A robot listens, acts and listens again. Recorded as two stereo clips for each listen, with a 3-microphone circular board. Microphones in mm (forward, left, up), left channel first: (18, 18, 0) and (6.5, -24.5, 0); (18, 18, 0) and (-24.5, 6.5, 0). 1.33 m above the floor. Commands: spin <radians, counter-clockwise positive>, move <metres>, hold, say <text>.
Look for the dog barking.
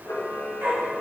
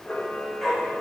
spin -1.31
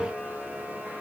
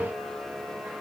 hold
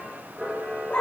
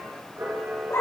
spin 0.26
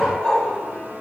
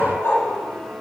say Found it: a dog barking, straight ahead.